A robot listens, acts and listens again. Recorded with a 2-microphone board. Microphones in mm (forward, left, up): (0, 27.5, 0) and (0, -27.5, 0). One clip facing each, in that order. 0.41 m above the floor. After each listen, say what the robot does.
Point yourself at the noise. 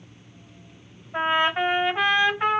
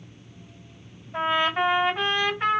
Turn 30° left.
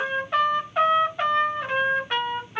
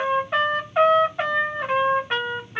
Turn 15° right.
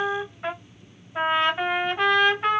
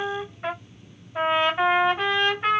Found it: a trumpet, straight ahead.